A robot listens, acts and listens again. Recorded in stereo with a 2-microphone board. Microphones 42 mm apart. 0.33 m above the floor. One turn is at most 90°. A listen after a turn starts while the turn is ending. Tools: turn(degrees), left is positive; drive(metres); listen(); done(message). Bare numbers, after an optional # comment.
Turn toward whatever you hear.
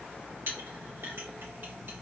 # The clink: about 65° right or 115° right.
turn(-65)
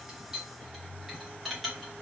done("Found it: a clink, straight ahead.")